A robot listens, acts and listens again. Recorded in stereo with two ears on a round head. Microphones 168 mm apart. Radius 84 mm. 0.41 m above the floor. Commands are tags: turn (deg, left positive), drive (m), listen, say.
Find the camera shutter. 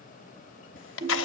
<turn deg="75"/>
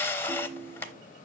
<turn deg="15"/>
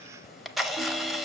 <say>Facing the camera shutter, under 1 m away.</say>